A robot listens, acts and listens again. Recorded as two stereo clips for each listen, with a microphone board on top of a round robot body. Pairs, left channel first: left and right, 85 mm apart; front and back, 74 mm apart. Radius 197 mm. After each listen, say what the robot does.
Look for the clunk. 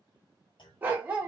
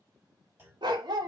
Turn 115° left.
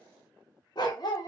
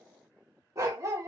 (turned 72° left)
Turn 40° left.
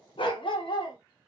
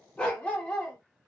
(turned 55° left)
Turn 15° right.
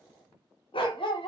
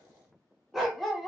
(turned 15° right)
I heard a clunk from this way, but can't make it out now.